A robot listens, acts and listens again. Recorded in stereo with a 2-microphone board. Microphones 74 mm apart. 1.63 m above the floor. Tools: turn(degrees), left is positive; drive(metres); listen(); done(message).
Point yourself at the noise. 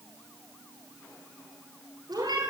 turn(degrees=-90)
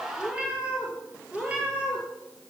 turn(degrees=-15)
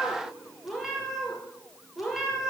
done("Facing the cat meowing.")